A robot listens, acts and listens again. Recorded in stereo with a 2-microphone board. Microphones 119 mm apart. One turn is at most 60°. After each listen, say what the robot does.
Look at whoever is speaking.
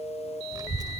Turn 35° right.
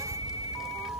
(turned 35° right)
Facing the child speaking.